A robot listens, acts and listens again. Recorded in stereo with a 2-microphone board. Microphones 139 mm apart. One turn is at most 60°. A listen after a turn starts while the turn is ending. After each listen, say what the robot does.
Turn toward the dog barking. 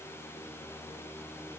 Keep listening.
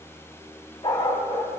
Turn 30° left.
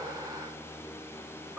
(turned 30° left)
Keep listening.
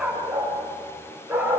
Turn 10° right.
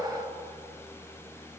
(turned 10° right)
Keep listening.
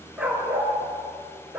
Turn 10° right.
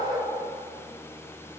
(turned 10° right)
Facing the dog barking, over 4 m away.